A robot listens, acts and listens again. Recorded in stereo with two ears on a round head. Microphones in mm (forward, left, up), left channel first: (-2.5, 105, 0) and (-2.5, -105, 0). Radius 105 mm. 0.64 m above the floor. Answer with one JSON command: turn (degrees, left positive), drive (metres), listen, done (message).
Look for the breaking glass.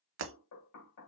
{"turn": -55}
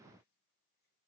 {"listen": true}
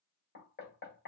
{"done": "I heard breaking glass, but can't make it out now. It was about straight ahead or 70° right."}